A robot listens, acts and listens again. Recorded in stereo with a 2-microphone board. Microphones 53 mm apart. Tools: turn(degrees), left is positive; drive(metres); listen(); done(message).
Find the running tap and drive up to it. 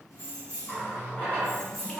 turn(degrees=35)
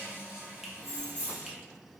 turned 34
turn(degrees=110)
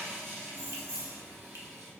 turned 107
drive(metres=1.0)
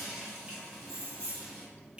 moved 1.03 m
drive(metres=1.0)
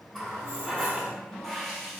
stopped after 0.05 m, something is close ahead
done("Arrived at the running tap, straight ahead.")